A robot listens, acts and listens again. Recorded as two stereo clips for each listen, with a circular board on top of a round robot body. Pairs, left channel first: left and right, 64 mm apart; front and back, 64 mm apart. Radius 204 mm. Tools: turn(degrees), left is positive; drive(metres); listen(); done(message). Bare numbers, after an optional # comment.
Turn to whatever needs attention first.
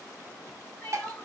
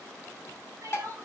# The crying: 150° left.
turn(150)
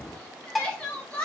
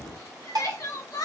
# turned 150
# The crying is now 20° left.
turn(20)
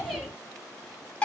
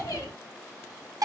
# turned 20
done("Found it: crying, straight ahead.")